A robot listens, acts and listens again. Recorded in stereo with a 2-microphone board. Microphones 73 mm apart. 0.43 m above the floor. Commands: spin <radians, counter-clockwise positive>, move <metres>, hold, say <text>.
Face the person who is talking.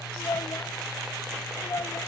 spin 1.05
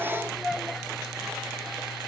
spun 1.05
spin 0.17
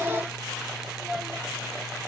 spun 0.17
say Found it: a child speaking, straight ahead.